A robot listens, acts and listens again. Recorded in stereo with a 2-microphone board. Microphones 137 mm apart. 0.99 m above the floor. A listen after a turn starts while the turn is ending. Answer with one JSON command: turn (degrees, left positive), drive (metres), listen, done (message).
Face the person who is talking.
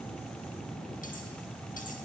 {"listen": true}
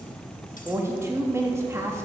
{"turn": -20}
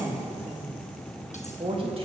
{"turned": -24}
{"turn": -135}
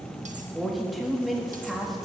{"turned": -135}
{"done": "Found it: a woman speaking, straight ahead, 1 to 2 m away."}